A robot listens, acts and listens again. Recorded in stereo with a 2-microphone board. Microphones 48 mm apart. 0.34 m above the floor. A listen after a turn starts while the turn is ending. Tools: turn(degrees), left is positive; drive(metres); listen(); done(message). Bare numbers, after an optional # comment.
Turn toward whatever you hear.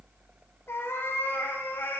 # The cat meowing: about 50° left or 130° left.
turn(50)
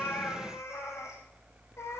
# So it is at 80° left.
turn(80)
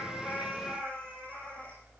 # The cat meowing is now 25° left.
turn(25)
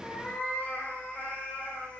# The cat meowing is now 30° left.
turn(30)
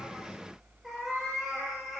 done("Found it: a cat meowing, straight ahead, over 4 m away.")